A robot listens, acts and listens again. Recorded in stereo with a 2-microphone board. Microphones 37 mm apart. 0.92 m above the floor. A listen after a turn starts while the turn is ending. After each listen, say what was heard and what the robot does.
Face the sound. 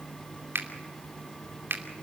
The finger snap: about 75° right or 105° right. Turn 75° right.
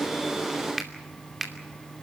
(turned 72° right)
Found it: a finger snap, straight ahead, 2 to 4 m away.